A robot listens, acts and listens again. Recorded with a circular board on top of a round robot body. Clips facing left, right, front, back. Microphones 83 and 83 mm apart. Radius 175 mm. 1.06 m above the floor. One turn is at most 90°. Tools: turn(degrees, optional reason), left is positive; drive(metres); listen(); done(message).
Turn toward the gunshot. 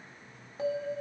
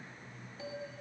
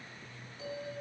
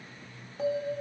listen()
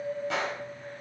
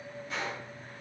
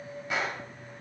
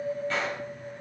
turn(degrees=80, reason="The gunshot: 80° left.")
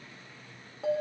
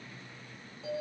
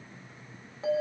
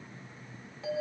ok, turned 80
done("Facing where the gunshot came from. I can't hear it now.")